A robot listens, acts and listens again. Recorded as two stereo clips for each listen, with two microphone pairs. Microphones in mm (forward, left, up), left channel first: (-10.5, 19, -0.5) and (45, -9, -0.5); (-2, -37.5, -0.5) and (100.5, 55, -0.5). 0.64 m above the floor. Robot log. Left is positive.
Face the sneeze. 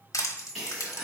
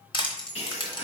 note: The sneeze: 105° right.
cmd yaw -105
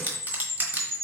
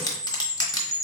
end: I heard a sneeze from this way, but can't make it out now.